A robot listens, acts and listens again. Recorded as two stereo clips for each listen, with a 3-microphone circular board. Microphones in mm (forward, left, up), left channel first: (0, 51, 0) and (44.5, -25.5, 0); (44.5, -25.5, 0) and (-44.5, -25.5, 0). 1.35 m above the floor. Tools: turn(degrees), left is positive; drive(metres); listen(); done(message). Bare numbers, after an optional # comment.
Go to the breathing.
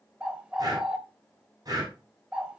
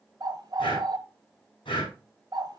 # The breathing: 20° right.
turn(-20)
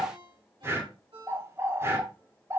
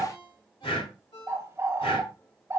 drive(1.0)
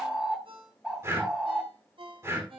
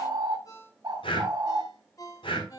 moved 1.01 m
drive(1.0)
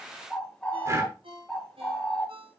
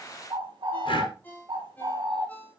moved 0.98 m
# The breathing is now 10° right.
turn(-10)
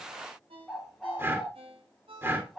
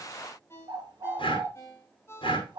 drive(1.0)
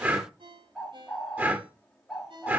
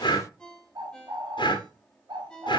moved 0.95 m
drive(1.0)
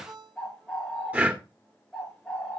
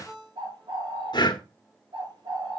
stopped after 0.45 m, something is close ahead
# The breathing is now 10° left.
turn(10)
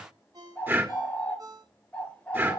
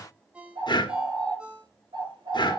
done("Arrived at the breathing, straight ahead.")